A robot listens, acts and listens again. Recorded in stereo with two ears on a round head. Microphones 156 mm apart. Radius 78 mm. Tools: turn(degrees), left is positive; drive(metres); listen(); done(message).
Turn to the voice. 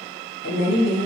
turn(degrees=60)
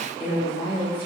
turn(degrees=35)
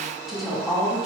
done("Found it: a woman speaking, straight ahead, 1 to 2 m away.")